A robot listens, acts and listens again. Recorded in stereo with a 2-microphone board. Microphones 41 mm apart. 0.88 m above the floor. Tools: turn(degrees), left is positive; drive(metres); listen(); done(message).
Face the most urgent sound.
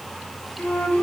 listen()
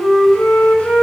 listen()
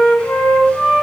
done("I can't make out anything urgent to turn to.")